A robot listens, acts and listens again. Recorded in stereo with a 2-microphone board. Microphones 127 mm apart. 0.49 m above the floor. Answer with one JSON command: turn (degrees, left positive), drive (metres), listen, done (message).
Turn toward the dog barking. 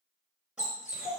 {"turn": -30}
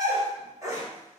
{"turn": -160}
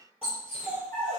{"turn": -15}
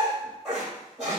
{"done": "Facing the dog barking, 2 to 4 m away."}